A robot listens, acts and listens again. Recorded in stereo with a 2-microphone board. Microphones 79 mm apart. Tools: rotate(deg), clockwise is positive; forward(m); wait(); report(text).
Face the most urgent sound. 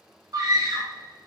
rotate(55)
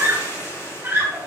rotate(35)
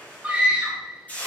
rotate(20)
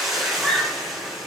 report("Facing the scream.")